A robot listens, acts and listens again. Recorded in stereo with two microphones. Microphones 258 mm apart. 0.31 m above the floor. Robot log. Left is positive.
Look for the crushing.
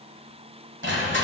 note: The crushing: about 45° right or 135° right.
cmd yaw -45
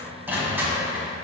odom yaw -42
note: So it is at 10° right.
cmd yaw -10
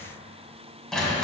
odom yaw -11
end: Facing the crushing, 1 to 2 m away.